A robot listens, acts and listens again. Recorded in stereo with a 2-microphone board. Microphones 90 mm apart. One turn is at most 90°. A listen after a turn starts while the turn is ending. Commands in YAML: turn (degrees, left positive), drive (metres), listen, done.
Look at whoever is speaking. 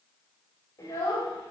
turn: 40
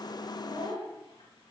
turn: 90
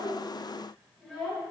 done: "Facing the child speaking, 2 to 4 m away."